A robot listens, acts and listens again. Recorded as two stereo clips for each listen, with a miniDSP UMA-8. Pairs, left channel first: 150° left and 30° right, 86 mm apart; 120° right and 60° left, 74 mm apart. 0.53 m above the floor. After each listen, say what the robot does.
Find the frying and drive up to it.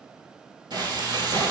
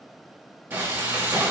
Drive 1.0 m forward.
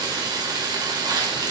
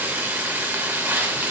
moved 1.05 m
Drive 1.0 m forward.
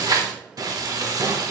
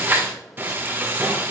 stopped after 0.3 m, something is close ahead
Arrived at the frying, straight ahead.